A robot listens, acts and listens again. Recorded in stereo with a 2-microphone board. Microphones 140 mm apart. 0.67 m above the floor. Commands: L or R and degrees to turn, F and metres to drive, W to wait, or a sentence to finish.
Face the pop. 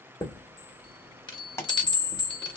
L20
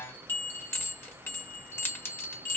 W
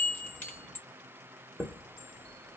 I heard a pop, but can't make it out now. It was about straight ahead or 140° left.